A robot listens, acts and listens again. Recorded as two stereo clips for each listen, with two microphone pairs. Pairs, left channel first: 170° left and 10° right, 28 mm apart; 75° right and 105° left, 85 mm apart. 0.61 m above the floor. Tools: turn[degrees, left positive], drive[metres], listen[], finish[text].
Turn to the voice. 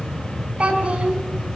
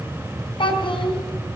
Thought: The child speaking: 65° right.
Action: turn[-65]
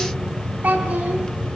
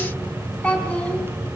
Action: finish[Found it: a child speaking, straight ahead, over 4 m away.]